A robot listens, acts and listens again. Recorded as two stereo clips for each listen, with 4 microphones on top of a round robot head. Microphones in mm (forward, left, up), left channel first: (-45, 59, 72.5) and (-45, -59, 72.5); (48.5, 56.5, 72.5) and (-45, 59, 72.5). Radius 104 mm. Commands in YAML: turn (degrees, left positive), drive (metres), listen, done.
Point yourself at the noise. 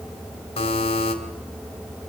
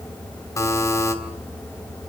turn: 50
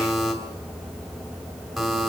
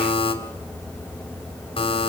done: "Found it: a buzzer, straight ahead, 2 to 4 m away."